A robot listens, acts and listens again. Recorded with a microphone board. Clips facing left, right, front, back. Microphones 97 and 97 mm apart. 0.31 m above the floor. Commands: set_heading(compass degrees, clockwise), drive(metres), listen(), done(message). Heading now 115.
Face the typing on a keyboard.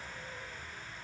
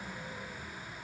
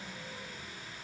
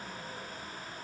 listen()
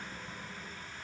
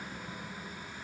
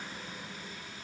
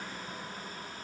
listen()
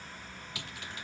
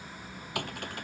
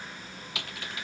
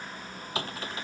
set_heading(240)
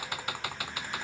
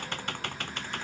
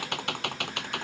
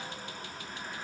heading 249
done("Facing the typing on a keyboard.")